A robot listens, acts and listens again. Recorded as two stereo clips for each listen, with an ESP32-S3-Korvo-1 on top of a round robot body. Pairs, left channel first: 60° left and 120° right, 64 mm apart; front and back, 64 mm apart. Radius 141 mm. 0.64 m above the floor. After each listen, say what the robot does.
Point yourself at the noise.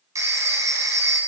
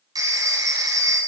Turn 155° right.
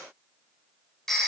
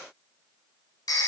Turn 25° right.
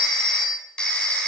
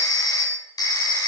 Turn 15° right.
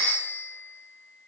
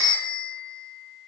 Facing the phone ringing.